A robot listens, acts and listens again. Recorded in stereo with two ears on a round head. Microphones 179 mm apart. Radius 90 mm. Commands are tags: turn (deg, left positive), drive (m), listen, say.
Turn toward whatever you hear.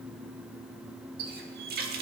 <turn deg="-50"/>
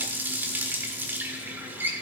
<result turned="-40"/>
<turn deg="-10"/>
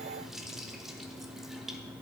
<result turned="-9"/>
<listen/>
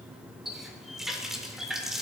<say>Facing the running tap.</say>